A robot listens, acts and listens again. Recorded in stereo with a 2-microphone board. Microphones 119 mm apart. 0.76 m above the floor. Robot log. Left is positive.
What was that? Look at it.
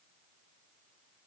cmd idle
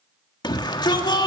note: The shout: about 35° left or 145° left.
cmd yaw +35
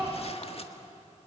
cmd idle
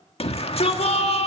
note: So it is at 95° left.
cmd yaw +95
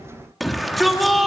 end: Found it: a shout, straight ahead.